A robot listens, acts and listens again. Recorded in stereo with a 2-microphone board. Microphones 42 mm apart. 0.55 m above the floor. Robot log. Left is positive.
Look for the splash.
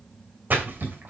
note: The splash: about 45° right or 135° right.
cmd yaw -45
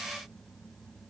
cmd idle
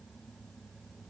end: I heard a splash, but can't make it out now. It was about straight ahead or 90° right.